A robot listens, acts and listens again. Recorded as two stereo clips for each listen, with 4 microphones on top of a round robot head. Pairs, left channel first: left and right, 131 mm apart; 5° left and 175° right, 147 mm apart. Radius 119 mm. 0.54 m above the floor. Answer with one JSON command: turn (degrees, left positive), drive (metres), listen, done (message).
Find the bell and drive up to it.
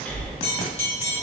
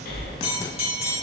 {"turn": 50}
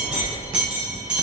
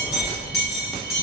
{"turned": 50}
{"turn": -10}
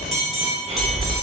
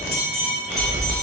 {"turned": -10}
{"drive": 1.0}
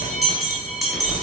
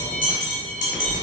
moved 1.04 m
{"drive": 1.0}
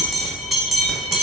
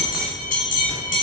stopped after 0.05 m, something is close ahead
{"done": "I am next to the bell."}